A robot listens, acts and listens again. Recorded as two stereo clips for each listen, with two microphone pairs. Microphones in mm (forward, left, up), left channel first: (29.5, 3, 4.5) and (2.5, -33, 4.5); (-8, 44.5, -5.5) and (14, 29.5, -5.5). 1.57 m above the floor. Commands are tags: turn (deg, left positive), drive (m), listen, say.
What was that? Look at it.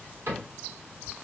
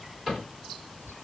<turn deg="-105"/>
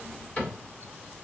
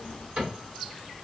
<say>Facing the cupboard door.</say>